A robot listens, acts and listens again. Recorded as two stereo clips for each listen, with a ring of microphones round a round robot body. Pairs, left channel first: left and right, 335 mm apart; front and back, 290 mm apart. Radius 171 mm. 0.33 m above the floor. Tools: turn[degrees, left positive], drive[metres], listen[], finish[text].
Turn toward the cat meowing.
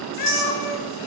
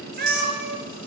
Thought: The cat meowing: 130° left.
Action: turn[130]
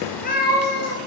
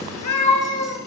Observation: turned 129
Thought: The cat meowing is now 30° left.
Action: turn[30]
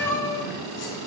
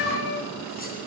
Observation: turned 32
Thought: The cat meowing is now 10° left.
Action: turn[10]
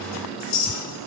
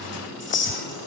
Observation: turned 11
Action: listen[]
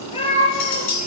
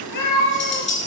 Thought: The cat meowing is now 20° left.
Action: turn[20]
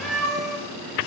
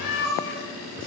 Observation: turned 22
Action: finish[Found it: a cat meowing, straight ahead.]